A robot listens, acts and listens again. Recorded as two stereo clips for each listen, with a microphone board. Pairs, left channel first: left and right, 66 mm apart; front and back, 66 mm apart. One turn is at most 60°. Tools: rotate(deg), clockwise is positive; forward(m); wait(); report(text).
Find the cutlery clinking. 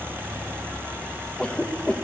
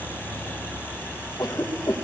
wait()
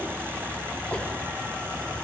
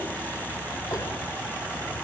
wait()
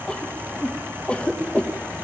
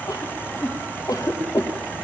report("I can't make out cutlery clinking to turn to.")